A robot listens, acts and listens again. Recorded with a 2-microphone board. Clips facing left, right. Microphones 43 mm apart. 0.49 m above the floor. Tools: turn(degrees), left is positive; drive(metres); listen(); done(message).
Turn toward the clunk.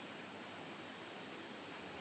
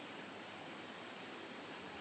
listen()
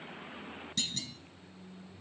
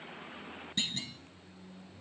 turn(degrees=-25)
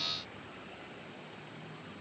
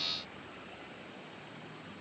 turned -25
listen()
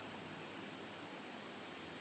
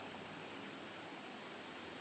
done("I heard a clunk, but can't make it out now. It was about straight ahead or 130° right.")